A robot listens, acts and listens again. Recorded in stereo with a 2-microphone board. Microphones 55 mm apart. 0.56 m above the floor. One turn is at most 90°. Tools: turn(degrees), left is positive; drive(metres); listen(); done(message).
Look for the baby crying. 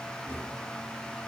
listen()
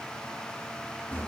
listen()
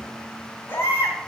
turn(degrees=50)
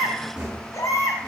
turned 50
turn(degrees=80)
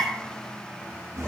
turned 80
turn(degrees=25)
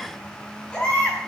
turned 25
turn(degrees=15)
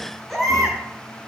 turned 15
done("Found it: a baby crying, straight ahead, 2 to 4 m away.")